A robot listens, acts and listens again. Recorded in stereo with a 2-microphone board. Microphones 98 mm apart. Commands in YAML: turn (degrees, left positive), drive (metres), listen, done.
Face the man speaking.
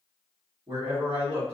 turn: -75
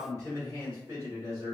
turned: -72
turn: -30
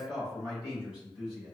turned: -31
done: "Found it: a man speaking, straight ahead, 2 to 4 m away."